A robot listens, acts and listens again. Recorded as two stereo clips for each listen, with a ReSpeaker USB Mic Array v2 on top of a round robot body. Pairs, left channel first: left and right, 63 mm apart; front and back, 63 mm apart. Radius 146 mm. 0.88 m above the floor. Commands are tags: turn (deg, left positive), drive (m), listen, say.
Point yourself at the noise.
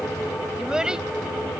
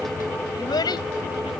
<turn deg="-10"/>
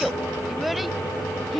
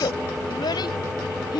<say>Facing the child speaking.</say>